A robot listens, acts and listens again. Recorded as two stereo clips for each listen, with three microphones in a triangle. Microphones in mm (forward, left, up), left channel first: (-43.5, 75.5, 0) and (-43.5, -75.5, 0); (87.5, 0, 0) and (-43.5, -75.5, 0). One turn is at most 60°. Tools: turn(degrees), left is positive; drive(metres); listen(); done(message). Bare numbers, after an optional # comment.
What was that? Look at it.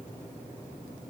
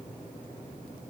listen()
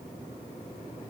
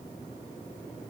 listen()
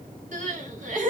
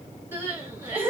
# The crying: 75° right.
turn(-60)
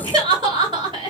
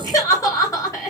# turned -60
# The crying is now 40° right.
turn(-40)
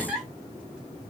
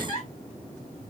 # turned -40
done("Found it: crying, straight ahead.")